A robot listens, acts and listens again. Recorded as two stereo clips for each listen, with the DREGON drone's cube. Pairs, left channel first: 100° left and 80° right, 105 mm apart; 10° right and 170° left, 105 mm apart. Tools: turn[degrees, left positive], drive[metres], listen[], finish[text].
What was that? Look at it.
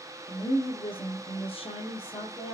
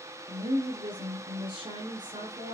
Thought: The woman speaking: 125° left.
Action: turn[125]
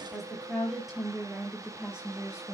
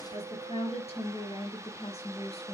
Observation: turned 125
Action: finish[Found it: a woman speaking, straight ahead.]